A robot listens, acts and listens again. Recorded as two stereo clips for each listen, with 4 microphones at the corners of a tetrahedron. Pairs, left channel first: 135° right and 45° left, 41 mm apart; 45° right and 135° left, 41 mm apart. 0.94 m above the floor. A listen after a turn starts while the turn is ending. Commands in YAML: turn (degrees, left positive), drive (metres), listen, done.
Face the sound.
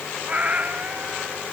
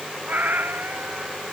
turn: 100
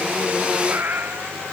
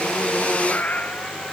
done: "Facing the cat meowing."